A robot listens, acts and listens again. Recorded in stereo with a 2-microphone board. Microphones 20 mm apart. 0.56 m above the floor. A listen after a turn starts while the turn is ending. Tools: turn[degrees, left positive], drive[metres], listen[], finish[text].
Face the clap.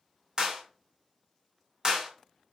Thought: The clap: about 35° right or 145° right.
Action: turn[-35]
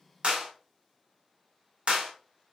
Thought: So it is at 105° right.
Action: turn[-105]
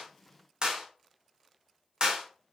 Thought: The clap is now 45° right.
Action: turn[-45]
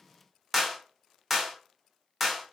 Action: finish[Found it: a clap, straight ahead, 1 to 2 m away.]